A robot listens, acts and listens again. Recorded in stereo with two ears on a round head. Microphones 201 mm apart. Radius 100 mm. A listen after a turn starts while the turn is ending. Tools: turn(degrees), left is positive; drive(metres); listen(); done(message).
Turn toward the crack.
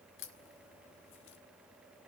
turn(degrees=55)
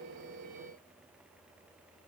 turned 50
listen()
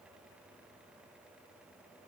done("I heard a crack, but can't make it out now. It was about 5° left or 75° left.")